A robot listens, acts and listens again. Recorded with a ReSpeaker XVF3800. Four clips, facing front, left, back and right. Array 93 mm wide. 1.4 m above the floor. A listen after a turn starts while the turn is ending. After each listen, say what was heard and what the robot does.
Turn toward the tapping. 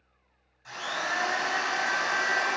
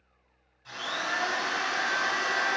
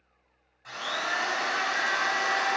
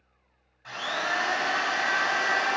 Keep listening.
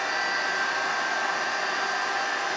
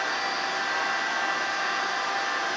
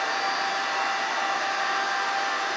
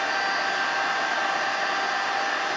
Keep listening.
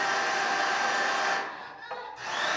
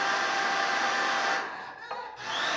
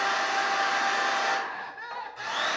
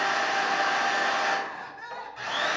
I can't make out tapping to turn to.